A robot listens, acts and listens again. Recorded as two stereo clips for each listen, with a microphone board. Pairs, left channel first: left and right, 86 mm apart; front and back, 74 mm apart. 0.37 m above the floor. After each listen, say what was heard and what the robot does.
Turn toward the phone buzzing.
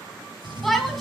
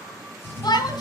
The phone buzzing: 110° right. Turn 110° right.
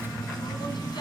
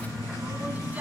Found it: a phone buzzing, straight ahead, 2 to 4 m away.